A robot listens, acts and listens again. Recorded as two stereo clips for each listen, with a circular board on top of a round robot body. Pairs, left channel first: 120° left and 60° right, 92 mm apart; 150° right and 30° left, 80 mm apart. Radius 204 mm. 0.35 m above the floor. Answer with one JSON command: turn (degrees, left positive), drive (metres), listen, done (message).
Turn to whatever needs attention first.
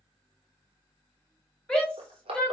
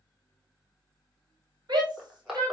{"turn": 40}
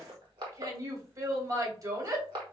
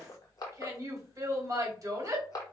{"turn": -10}
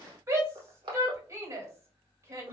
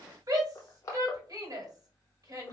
{"done": "Facing the shout, 1 to 2 m away."}